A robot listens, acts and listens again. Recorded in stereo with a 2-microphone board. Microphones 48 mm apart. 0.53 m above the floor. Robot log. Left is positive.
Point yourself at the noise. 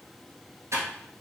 cmd yaw -90
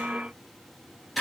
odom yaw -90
end: Facing the typing on a keyboard, 1 to 2 m away.